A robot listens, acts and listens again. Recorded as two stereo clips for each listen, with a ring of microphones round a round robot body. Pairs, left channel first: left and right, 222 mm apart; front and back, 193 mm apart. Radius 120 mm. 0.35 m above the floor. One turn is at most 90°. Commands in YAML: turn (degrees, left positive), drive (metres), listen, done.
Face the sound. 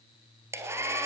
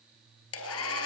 turn: -10
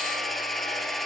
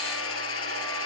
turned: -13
done: "Found it: a hair dryer, straight ahead, 2 to 4 m away."